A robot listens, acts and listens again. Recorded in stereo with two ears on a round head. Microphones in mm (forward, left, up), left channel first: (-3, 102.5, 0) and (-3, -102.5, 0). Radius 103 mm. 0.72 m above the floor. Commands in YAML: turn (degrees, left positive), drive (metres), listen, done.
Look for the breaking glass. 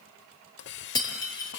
turn: 20
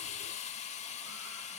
listen: true
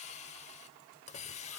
done: "I heard breaking glass, but can't make it out now. It was about straight ahead or 140° left."